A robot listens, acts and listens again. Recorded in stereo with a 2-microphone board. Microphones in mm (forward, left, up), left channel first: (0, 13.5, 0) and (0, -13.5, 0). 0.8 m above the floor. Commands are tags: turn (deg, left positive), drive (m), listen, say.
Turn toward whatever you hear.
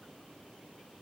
<listen/>
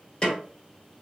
<turn deg="30"/>
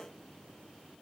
<listen/>
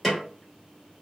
<say>Facing the snare drum.</say>